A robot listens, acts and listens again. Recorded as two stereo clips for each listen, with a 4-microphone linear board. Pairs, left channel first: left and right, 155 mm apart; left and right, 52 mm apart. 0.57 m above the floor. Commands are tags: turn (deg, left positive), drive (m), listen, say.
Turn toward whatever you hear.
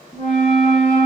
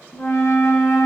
<turn deg="90"/>
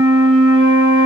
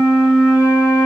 <turn deg="-10"/>
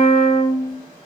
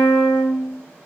<say>Found it: a flute, straight ahead, 1 to 2 m away.</say>